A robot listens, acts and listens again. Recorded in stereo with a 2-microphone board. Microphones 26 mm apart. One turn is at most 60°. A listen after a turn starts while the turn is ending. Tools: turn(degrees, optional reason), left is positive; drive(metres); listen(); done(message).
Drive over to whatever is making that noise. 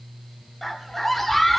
turn(degrees=30)
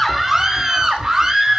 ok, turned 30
turn(degrees=-20, reason="So it is at 20° right.")
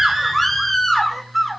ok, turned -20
drive(metres=1.0)
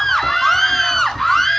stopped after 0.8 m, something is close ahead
turn(degrees=10, reason="The scream is now 10° left.")
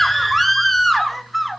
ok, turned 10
done("Arrived at the scream, straight ahead.")